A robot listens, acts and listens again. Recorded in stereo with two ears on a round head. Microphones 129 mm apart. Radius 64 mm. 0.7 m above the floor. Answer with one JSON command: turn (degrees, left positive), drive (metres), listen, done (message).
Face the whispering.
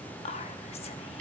{"turn": 45}
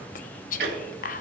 {"turn": 85}
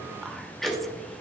{"listen": true}
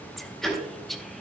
{"done": "Found it: whispering, straight ahead, under 1 m away."}